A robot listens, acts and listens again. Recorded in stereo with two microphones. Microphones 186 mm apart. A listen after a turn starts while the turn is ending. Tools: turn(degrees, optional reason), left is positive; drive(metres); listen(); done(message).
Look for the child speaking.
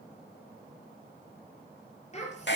turn(degrees=35, reason="The child speaking: about 35° left or 145° left.")
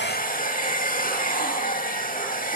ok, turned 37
listen()
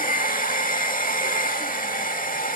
listen()
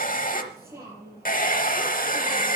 turn(degrees=-15, reason="So it is at 15° right.")
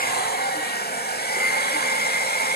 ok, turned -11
listen()
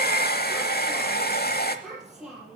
done("Facing the child speaking, over 4 m away.")